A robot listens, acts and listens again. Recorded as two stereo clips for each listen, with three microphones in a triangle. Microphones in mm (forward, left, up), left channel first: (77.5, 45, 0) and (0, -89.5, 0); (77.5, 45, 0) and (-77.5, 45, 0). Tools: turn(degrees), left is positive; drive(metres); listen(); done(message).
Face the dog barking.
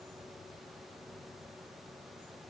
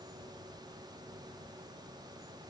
listen()
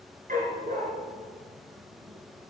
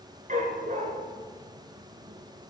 turn(degrees=-145)
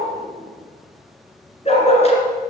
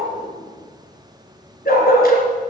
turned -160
turn(degrees=15)
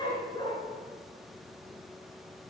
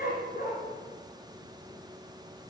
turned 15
done("Found it: a dog barking, straight ahead.")